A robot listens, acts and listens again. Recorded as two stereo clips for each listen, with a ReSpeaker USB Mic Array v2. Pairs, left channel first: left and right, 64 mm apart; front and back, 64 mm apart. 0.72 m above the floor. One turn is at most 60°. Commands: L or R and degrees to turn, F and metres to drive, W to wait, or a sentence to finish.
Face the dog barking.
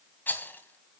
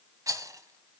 W
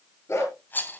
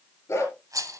L45
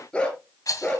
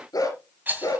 L20
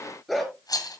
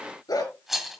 Found it: a dog barking, straight ahead.